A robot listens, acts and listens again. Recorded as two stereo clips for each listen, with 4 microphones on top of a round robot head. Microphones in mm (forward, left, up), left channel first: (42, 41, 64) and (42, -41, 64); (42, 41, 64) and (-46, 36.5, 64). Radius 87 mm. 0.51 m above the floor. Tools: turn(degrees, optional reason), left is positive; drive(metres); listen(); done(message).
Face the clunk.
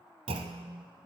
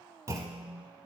turn(degrees=-110, reason="The clunk: 110° right.")
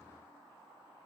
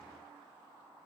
done("Facing where the clunk came from. I can't hear it now.")